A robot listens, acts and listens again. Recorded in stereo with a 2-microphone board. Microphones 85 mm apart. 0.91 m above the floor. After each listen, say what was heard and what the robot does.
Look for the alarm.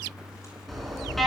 Turn 30° left.
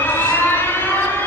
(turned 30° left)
So it is at 150° left. Turn 150° left.
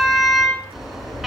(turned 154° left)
Found it: an alarm, straight ahead, 2 to 4 m away.